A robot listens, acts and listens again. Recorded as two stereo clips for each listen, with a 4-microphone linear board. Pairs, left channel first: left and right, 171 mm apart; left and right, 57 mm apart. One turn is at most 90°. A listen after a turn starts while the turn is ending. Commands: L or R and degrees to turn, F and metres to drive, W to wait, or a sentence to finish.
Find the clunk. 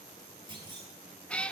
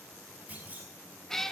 R25
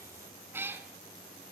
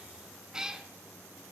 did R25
W
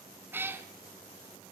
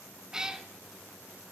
I heard a clunk, but can't make it out now. It was about straight ahead or 130° right.